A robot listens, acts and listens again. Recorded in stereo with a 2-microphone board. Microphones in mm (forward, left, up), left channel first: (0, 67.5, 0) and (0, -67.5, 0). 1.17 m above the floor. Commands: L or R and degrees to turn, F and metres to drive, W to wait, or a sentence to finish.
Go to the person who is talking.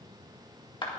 W
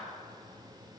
W
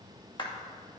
I can't make out anyone speaking, only a clap.